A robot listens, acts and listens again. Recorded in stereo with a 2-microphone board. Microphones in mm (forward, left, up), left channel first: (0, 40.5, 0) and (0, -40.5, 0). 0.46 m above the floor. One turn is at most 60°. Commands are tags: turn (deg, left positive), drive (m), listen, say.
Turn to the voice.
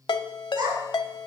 <turn deg="-55"/>
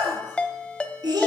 <turn deg="-55"/>
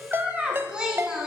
<turn deg="-10"/>
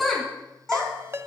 <say>Found it: a child speaking, straight ahead, 2 to 4 m away.</say>